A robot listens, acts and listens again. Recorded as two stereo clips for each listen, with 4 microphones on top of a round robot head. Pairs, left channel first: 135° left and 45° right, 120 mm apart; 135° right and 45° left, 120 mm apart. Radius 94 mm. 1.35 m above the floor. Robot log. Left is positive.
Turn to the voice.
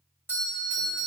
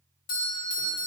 cmd idle
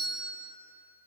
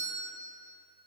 cmd idle
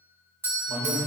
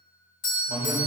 note: The man speaking: 20° left.
cmd yaw +20
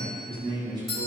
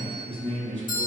note: The man speaking is now 10° left.
cmd yaw +10
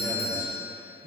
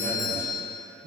note: The man speaking is now 10° left.
cmd yaw +10
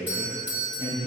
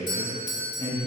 end: Facing the man speaking.